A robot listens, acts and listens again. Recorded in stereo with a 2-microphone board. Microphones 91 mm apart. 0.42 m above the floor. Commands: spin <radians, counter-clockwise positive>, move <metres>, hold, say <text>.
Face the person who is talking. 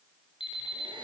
hold
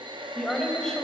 spin 0.52
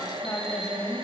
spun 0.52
spin 2.44
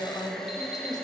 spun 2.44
spin 0.96
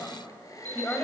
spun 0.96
spin 0.35
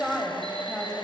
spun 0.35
say Found it: a woman speaking, straight ahead, 2 to 4 m away.